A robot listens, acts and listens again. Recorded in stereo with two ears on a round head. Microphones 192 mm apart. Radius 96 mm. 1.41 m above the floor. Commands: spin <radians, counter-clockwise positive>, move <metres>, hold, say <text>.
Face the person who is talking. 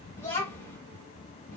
spin 0.52
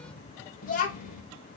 spin 2.36
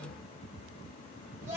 spin -0.26
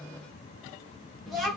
say Facing the child speaking, 1 to 2 m away.